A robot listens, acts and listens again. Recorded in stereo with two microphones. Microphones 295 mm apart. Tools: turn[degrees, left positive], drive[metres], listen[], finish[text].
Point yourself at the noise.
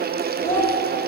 Action: turn[30]
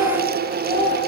Thought: So it is at 35° right.
Action: turn[-35]
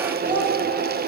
Thought: The child speaking is now 10° right.
Action: turn[-10]
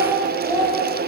Thought: The child speaking is now 10° right.
Action: turn[-10]
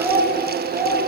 Thought: The child speaking is now 10° right.
Action: turn[-10]
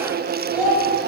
Action: finish[Facing the child speaking.]